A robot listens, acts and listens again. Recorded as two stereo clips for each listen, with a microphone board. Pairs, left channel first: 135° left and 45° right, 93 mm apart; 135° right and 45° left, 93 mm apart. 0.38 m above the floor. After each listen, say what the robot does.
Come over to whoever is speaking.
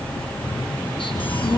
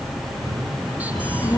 Turn 180° left.
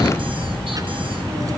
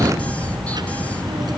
Drive 1.0 m forward.
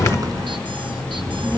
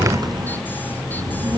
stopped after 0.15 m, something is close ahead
Something is in my way. I am facing the child speaking but have not reached it.